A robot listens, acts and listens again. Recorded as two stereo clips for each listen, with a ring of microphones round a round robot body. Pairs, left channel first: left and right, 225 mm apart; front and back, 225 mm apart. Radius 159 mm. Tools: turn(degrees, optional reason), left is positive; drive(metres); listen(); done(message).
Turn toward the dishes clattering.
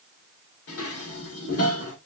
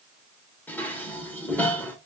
turn(degrees=80, reason="The dishes clattering: 80° left.")
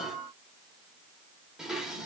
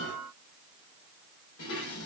done("Facing the dishes clattering.")